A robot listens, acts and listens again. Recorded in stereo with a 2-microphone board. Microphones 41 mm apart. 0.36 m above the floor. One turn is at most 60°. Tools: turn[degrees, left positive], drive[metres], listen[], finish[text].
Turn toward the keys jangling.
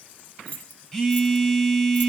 Thought: The keys jangling: about 35° left or 145° left.
Action: turn[35]
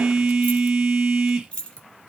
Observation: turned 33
Thought: The keys jangling: about 25° left or 155° left.
Action: turn[25]
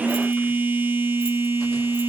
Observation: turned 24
Action: listen[]
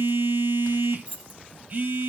Thought: So it is at 25° right.
Action: turn[-25]
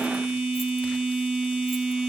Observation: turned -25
Action: listen[]
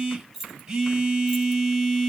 Action: finish[Facing the keys jangling.]